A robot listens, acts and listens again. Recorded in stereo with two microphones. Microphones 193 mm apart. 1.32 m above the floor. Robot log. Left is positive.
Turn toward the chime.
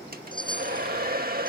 note: The chime: about 25° left or 155° left.
cmd yaw +25
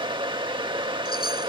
cmd idle
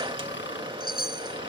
note: So it is at 130° left.
cmd yaw +130
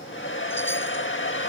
cmd idle
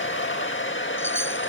cmd idle
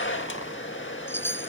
note: The chime is now 10° left.
cmd yaw +10
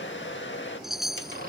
end: Facing the chime.